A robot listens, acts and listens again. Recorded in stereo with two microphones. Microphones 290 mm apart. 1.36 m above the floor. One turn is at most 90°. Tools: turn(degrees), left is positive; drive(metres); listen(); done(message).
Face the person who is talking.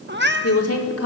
turn(degrees=55)
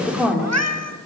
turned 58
done("Facing the woman speaking.")